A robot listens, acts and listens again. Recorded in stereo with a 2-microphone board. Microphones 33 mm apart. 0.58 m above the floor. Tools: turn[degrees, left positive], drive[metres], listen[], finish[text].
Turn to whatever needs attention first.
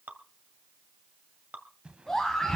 Action: turn[30]
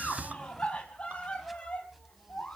Thought: So it is at 135° left.
Action: turn[135]
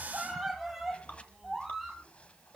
Action: finish[Facing the scream, 2 to 4 m away.]